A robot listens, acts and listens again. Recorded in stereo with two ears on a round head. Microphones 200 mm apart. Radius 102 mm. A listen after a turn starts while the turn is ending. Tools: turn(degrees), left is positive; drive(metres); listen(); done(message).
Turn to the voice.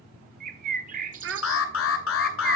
turn(degrees=-55)
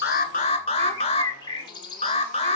listen()
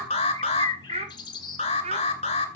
turn(degrees=-35)
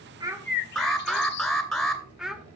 done("Found it: a child speaking, straight ahead, 1 to 2 m away.")